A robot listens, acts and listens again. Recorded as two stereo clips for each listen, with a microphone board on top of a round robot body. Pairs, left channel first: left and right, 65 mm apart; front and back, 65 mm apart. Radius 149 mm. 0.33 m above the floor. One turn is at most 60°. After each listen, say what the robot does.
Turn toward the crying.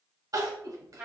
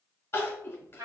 Turn 55° right.
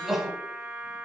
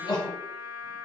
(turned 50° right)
Facing the crying, 1 to 2 m away.